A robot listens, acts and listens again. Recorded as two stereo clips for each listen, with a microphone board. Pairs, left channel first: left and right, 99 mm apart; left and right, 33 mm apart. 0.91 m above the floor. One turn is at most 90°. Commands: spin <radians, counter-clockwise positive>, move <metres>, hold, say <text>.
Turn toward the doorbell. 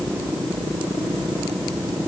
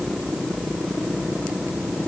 hold
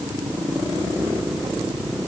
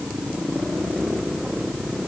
hold
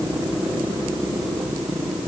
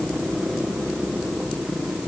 say I can't make out a doorbell to turn to.